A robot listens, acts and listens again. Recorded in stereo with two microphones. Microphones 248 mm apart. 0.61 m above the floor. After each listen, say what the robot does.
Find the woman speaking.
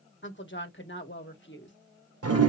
Turn 50° left.
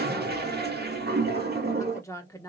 Turn 15° left.
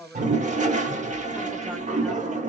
Facing the woman speaking, 1 to 2 m away.